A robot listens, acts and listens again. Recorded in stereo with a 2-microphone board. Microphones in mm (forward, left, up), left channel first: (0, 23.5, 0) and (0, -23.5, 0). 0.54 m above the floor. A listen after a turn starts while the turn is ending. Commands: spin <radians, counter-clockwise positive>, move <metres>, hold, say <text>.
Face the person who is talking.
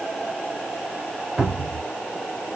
hold
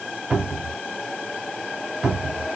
hold
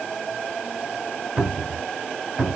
say I can't make out anyone speaking, only a cupboard door.